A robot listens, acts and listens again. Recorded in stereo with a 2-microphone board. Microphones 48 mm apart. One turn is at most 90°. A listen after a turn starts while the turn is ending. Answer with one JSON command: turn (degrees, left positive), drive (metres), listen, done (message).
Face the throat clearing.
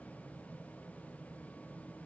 {"listen": true}
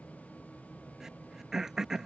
{"turn": -30}
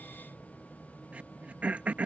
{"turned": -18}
{"turn": -90}
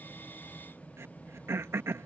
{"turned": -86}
{"turn": -65}
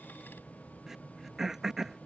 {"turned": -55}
{"turn": -10}
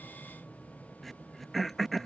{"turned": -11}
{"done": "Found it: throat clearing, straight ahead."}